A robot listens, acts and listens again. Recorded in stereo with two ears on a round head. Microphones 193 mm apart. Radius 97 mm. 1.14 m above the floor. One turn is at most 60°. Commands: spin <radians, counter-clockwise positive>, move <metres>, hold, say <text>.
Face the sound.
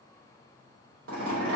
spin -1.05
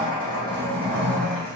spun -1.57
say Found it: a zipper, straight ahead, 1 to 2 m away.